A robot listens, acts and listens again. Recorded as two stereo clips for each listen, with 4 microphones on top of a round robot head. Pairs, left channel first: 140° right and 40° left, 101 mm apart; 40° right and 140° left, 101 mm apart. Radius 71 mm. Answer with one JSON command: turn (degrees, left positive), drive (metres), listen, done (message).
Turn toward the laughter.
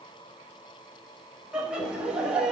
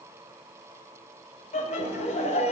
{"turn": -40}
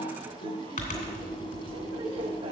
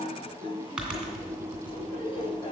{"listen": true}
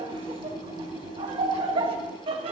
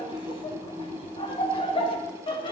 {"done": "Facing the laughter, 1 to 2 m away."}